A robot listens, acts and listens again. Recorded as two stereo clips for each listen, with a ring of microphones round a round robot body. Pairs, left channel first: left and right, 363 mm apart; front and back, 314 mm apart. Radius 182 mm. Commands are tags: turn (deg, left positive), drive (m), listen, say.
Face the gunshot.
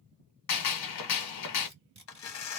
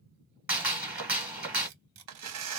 <turn deg="95"/>
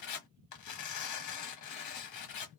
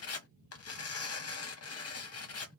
<say>I heard a gunshot from this way, but can't make it out now.</say>